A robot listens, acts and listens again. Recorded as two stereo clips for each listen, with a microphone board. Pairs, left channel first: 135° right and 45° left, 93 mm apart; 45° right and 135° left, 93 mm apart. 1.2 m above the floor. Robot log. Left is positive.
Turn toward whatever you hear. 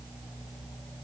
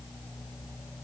cmd idle
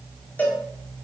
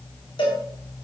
note: The cowbell: 65° right.
cmd yaw -65
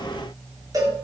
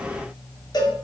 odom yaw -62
end: Facing the cowbell.